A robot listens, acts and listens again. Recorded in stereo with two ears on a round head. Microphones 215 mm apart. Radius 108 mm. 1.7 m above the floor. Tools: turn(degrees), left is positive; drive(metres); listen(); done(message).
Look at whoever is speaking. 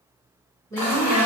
turn(degrees=30)
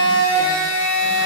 listen()
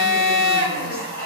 listen()
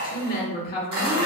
turn(degrees=135)
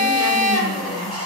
listen()
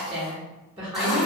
turn(degrees=-25)
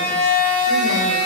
listen()
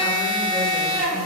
listen()
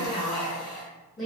done("Found it: a woman speaking, straight ahead, 1 to 2 m away.")